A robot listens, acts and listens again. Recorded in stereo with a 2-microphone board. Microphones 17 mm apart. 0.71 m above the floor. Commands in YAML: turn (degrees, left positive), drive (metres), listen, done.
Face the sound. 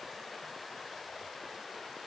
listen: true
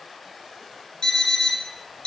turn: 65
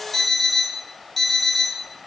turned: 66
done: "Found it: an alarm clock, straight ahead."